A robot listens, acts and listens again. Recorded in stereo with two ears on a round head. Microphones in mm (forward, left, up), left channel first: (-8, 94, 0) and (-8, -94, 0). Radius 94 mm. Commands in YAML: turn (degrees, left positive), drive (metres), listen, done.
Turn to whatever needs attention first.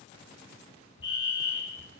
turn: 25
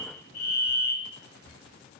turn: 130
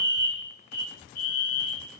turn: 50
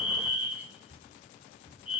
done: "Facing the fire alarm, 2 to 4 m away."